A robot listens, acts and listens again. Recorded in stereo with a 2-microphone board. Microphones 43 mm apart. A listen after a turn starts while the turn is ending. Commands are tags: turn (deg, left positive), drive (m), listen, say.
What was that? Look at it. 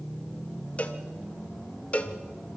<turn deg="30"/>
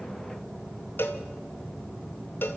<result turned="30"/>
<turn deg="115"/>
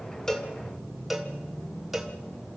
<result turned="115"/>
<say>Facing the cowbell.</say>